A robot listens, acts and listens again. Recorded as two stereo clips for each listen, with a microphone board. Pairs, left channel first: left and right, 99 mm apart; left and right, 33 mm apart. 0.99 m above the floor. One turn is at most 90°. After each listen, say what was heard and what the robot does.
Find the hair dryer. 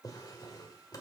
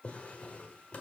Keep listening.
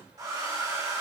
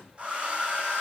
The hair dryer: about 35° right or 145° right. Turn 35° right.
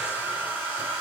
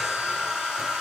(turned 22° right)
So it is at 15° right. Turn 15° right.
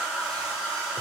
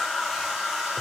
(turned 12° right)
Found it: a hair dryer, straight ahead, 2 to 4 m away.